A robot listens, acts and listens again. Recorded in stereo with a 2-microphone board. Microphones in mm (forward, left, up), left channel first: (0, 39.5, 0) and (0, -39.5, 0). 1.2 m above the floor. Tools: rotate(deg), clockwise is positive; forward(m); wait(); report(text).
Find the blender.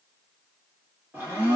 rotate(30)
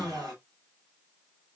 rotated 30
rotate(120)
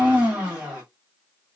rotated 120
rotate(15)
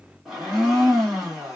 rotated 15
report("Found it: a blender, straight ahead, 1 to 2 m away.")